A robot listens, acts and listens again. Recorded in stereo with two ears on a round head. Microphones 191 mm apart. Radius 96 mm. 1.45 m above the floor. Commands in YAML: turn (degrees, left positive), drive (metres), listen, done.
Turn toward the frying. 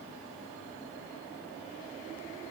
listen: true
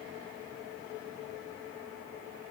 listen: true
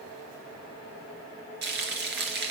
turn: -50
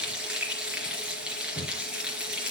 done: "Facing the frying, 2 to 4 m away."